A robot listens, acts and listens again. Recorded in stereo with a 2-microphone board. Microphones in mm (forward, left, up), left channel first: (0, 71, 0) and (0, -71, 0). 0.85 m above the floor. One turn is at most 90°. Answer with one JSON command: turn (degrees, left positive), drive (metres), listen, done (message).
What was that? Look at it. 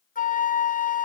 {"turn": 70}
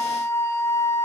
{"turn": 20}
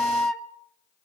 {"done": "Found it: a flute, straight ahead."}